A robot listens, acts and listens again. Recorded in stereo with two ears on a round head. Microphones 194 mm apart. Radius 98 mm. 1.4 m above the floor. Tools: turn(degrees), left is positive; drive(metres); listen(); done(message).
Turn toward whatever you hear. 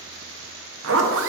turn(degrees=-65)
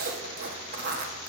turn(degrees=-45)
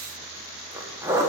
turn(degrees=-15)
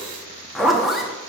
done("Found it: a zipper, straight ahead, 1 to 2 m away.")